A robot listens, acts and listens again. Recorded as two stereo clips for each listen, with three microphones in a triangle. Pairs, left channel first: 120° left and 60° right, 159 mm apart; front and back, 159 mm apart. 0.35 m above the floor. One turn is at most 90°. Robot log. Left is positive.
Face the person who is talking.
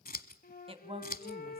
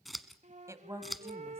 note: The woman speaking: 110° right.
cmd yaw -90
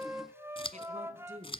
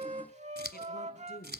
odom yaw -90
note: The woman speaking is now 15° right.
cmd yaw -15
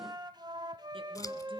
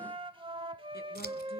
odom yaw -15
cmd idle
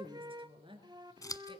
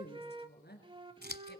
end: Facing the woman speaking.